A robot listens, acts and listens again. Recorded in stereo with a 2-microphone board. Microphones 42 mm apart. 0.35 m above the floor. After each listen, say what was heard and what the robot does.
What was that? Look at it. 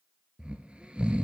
The snoring: about 25° right or 155° right. Turn 25° right.
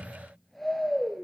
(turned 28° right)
Facing the snoring.